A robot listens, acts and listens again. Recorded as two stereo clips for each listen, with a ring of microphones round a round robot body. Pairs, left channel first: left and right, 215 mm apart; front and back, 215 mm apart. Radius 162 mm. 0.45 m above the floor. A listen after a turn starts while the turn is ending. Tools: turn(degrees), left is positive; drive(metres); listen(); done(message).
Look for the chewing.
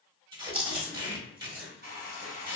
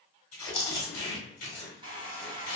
turn(degrees=-55)
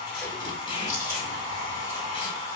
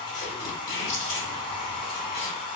turn(degrees=-10)
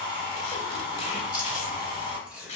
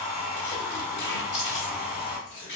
done("Found it: chewing, straight ahead.")